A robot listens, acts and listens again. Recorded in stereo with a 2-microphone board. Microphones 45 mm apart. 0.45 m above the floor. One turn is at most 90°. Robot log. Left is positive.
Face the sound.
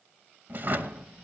note: The drawer: about 45° right or 135° right.
cmd yaw -45
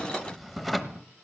end: Found it: a drawer, straight ahead, under 1 m away.